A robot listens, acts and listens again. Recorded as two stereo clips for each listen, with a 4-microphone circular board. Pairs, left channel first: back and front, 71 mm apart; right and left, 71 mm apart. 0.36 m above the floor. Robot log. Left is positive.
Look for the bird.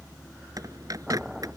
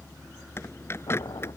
note: The bird: 35° right.
cmd yaw -35
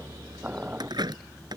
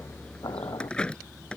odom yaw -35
note: The bird is now 10° right.
cmd yaw -10
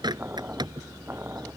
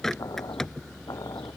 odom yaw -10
end: Facing the bird.